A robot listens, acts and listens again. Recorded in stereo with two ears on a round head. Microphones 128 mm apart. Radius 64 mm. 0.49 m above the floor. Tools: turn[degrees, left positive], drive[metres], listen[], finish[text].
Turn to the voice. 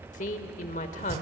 Thought: The woman speaking: about 55° left or 125° left.
Action: turn[55]
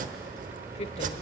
Thought: So it is at 50° left.
Action: turn[50]
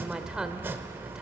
Action: finish[Found it: a woman speaking, straight ahead, 1 to 2 m away.]